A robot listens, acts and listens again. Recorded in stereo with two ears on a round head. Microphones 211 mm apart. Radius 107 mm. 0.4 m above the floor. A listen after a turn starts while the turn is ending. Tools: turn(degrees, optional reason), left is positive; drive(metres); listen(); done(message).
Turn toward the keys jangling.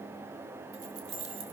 turn(degrees=-65, reason="The keys jangling: about 65° right or 115° right.")
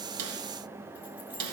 listen()
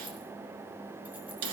listen()
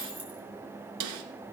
done("Found it: keys jangling, straight ahead.")